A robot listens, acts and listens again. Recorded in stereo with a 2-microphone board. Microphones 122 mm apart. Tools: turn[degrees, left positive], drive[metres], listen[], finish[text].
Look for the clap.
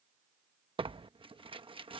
Action: listen[]
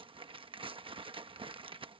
Action: listen[]
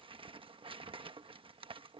Action: finish[I can't make out a clap to turn to.]